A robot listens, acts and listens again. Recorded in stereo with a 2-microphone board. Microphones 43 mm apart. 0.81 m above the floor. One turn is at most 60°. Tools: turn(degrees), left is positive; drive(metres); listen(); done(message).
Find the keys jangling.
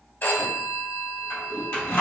turn(degrees=60)
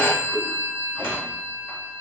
listen()
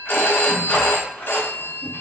turn(degrees=45)
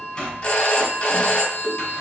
turn(degrees=15)
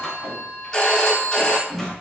listen()
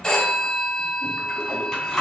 done("Facing the keys jangling, 2 to 4 m away.")